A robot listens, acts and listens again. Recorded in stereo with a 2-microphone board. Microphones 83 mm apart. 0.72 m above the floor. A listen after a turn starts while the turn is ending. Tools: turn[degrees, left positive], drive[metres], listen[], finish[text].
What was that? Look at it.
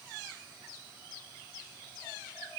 Action: listen[]
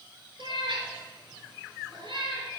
Thought: The cat meowing: about 75° right or 105° right.
Action: turn[-75]
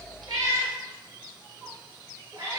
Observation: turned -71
Thought: So it is at 40° right.
Action: turn[-40]
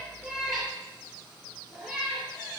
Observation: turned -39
Action: finish[Facing the cat meowing.]